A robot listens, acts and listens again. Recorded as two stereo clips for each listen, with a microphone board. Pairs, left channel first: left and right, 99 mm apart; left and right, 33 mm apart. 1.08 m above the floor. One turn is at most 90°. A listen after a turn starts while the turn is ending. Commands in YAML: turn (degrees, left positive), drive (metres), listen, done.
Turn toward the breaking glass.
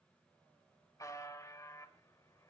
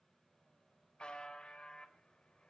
listen: true
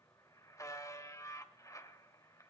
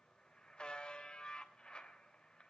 listen: true
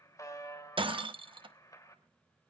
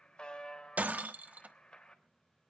turn: -55
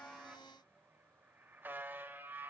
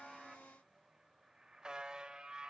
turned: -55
listen: true
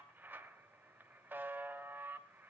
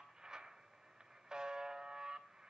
done: "I heard breaking glass, but can't make it out now. It was about straight ahead or 70° right."